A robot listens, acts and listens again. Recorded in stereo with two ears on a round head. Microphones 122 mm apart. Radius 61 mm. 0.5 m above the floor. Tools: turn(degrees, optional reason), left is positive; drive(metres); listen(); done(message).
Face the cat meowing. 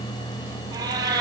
turn(degrees=-25, reason="The cat meowing: about 25° right or 155° right.")
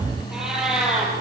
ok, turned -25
done("Facing the cat meowing.")